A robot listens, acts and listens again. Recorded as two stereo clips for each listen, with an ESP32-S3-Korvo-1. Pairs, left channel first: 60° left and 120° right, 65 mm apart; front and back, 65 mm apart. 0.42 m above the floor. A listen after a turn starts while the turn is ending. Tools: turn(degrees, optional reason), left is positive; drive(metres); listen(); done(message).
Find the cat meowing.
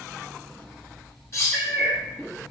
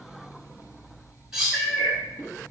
turn(degrees=70, reason="The cat meowing: 70° left.")
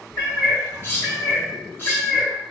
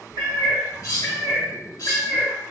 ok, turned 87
done("Facing the cat meowing.")